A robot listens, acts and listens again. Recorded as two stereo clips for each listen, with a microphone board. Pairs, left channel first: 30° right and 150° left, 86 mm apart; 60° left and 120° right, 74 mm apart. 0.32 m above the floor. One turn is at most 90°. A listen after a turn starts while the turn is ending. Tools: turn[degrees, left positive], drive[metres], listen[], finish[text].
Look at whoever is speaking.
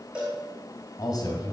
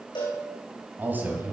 Thought: The man speaking: 60° right.
Action: turn[-60]
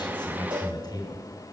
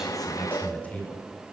Thought: The man speaking is now 10° right.
Action: turn[-10]
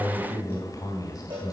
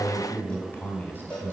Action: finish[Found it: a man speaking, straight ahead, 2 to 4 m away.]